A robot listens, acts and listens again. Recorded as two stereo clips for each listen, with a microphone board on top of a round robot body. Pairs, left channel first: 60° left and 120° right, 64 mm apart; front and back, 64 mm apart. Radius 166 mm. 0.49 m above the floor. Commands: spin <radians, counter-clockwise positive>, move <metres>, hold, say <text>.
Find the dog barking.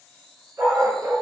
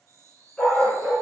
spin -1.40
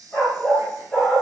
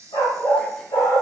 spin -0.52
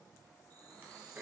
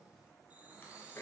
hold
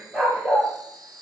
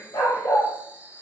spin -0.61
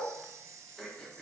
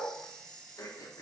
hold
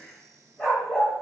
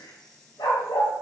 spin -0.35
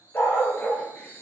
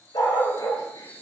say Facing the dog barking.